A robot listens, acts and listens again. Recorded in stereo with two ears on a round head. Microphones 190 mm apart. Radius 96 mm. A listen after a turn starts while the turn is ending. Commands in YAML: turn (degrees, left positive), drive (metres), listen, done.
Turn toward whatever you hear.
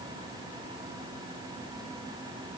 listen: true
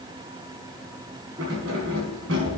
turn: -65
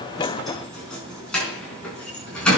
done: "Facing the keys jangling, over 4 m away."